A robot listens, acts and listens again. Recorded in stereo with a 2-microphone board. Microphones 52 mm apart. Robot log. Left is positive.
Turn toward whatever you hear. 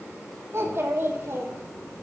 note: The child speaking: about 50° right or 130° right.
cmd yaw -50
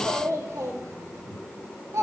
note: So it is at 75° right.
cmd yaw -75
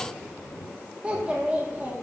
note: The child speaking is now 30° right.
cmd yaw -30
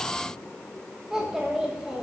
note: The child speaking is now 10° right.
cmd yaw -10
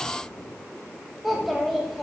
end: Facing the child speaking.